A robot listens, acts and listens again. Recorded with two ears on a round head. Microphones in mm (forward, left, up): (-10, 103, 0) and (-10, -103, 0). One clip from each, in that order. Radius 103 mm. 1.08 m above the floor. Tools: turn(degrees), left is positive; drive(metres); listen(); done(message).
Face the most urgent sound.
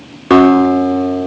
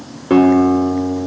listen()
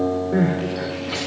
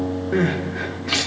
turn(degrees=-75)
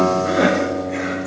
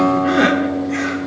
turn(degrees=-35)
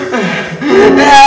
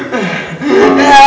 done("Facing the crying.")